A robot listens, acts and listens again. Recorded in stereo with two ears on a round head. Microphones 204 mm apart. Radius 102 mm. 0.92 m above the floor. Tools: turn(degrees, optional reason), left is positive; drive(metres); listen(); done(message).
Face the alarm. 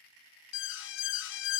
turn(degrees=55, reason="The alarm: about 55° left or 125° left.")
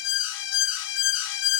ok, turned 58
turn(degrees=60, reason="So it is at 60° left.")
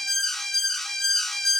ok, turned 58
done("Facing the alarm.")